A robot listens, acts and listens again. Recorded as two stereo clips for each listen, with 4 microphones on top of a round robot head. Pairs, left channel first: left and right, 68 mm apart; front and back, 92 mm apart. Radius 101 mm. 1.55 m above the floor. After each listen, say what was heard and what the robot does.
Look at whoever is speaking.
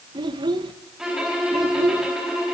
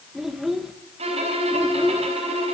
The child speaking: 90° right. Turn 90° right.
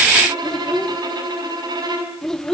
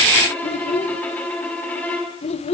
Facing the child speaking.